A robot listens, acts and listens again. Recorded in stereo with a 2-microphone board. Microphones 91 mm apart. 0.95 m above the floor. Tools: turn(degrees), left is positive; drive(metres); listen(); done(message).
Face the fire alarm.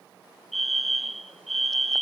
turn(degrees=30)
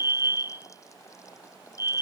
turn(degrees=-30)
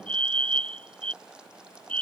turn(degrees=15)
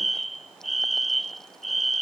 done("Found it: a fire alarm, straight ahead.")